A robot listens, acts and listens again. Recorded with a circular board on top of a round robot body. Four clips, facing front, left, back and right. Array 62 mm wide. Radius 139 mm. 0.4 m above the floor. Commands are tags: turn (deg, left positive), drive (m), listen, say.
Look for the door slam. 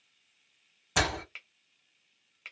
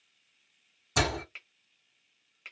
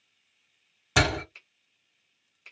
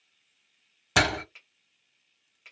<turn deg="-110"/>
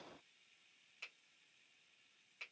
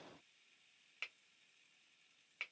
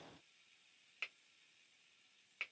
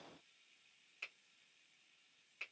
<say>Facing where the door slam came from. I can't hear it now.</say>